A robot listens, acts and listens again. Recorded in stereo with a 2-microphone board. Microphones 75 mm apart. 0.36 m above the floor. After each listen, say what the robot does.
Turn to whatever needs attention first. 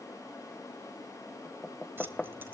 Keep listening.
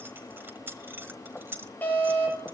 Turn 25° left.
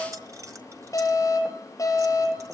Turn 130° left.
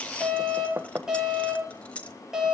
Turn 10° right.
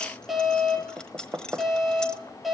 Facing the alarm, over 4 m away.